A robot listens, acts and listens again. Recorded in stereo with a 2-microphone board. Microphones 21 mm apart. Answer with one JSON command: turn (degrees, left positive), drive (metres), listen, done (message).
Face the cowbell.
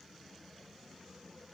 {"listen": true}
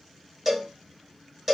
{"turn": -30}
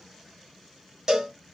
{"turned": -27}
{"turn": -145}
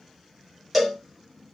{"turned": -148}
{"done": "Found it: a cowbell, straight ahead."}